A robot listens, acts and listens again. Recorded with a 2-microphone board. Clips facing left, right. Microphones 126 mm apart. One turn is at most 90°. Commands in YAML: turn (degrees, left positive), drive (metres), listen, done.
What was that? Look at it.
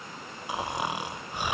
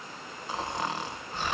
turn: 30
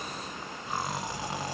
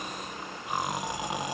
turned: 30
turn: -15
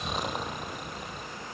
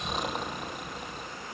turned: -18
done: "Facing the snoring, 1 to 2 m away."